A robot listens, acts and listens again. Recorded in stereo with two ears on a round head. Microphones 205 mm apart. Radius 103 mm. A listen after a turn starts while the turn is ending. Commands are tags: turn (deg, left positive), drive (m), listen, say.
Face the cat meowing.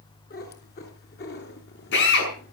<turn deg="45"/>
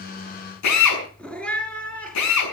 <say>Facing the cat meowing.</say>